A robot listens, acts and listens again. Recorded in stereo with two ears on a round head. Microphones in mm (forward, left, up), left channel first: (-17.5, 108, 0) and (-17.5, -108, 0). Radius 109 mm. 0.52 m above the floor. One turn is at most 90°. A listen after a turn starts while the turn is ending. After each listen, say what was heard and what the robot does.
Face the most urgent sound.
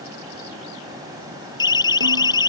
The siren: about 15° left or 165° left. Turn 15° left.
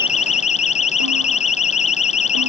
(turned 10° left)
So it is at 150° left. Turn 90° left.
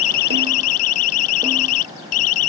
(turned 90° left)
The siren is now 60° left. Turn 60° left.
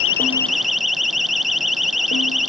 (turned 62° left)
Facing the siren.